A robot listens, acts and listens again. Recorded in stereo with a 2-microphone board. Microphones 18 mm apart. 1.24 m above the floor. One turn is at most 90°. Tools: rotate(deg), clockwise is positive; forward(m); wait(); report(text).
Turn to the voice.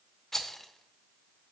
wait()
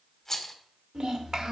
rotate(55)
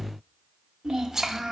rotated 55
rotate(50)
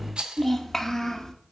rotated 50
rotate(-25)
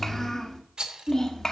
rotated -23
rotate(-25)
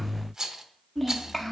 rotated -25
report("Facing the child speaking.")